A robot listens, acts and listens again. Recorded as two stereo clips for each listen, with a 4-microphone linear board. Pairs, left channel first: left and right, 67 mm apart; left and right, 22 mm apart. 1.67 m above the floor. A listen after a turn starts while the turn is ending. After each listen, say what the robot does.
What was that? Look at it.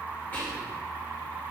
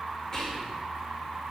Turn 25° left.
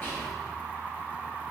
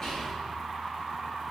Keep listening.
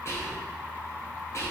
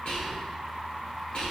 Turn 135° left.
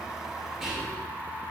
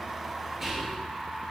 Found it: whispering, straight ahead, 1 to 2 m away.